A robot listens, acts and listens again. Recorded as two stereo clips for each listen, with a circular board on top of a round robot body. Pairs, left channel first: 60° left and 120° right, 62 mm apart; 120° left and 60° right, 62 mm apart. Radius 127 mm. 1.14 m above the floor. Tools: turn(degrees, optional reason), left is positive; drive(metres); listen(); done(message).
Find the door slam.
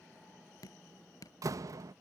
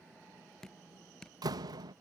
turn(degrees=-85, reason="The door slam: 85° right.")
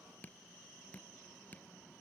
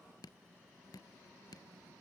done("I heard a door slam from this way, but can't make it out now.")